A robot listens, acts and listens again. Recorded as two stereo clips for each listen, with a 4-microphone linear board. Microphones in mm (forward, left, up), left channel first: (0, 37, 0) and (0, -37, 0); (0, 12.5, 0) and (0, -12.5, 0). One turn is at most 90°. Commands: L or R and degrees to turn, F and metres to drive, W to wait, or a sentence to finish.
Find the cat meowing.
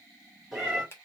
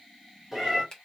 R30
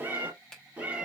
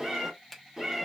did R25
R20
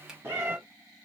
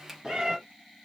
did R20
R90
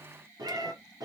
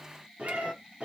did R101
R60
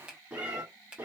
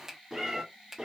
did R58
R25
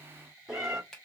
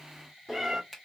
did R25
Facing the cat meowing.